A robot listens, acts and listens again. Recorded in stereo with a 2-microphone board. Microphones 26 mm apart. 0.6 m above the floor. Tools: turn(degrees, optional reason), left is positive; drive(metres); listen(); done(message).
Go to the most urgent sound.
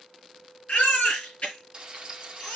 turn(degrees=60, reason="The baby crying: about 60° left or 120° left.")
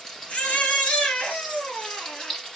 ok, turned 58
turn(degrees=60, reason="So it is at 60° left.")
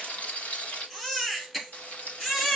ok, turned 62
drive(metres=1.0)
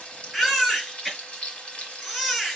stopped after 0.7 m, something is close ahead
done("Blocked. The baby crying is further on, straight ahead.")